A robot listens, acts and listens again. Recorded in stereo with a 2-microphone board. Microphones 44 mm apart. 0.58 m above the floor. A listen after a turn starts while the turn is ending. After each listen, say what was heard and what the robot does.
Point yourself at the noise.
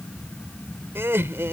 The laughter: about 60° right or 120° right. Turn 60° right.
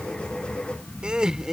So it is at 10° right. Turn 10° right.
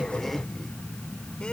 Keep listening.
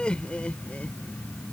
The laughter is now 25° left. Turn 25° left.
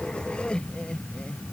The laughter is now 25° left. Turn 25° left.
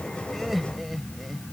Found it: laughter, straight ahead.